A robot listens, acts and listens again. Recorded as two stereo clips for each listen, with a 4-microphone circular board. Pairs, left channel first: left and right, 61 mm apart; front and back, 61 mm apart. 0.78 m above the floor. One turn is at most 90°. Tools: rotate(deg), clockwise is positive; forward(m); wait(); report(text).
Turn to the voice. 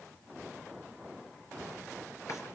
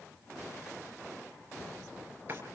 wait()
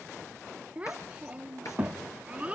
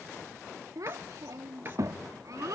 rotate(90)
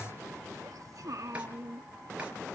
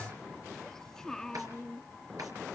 rotate(80)
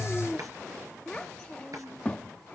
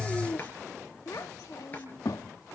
rotate(-15)
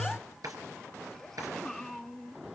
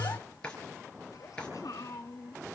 report("Found it: a child speaking, straight ahead, 1 to 2 m away.")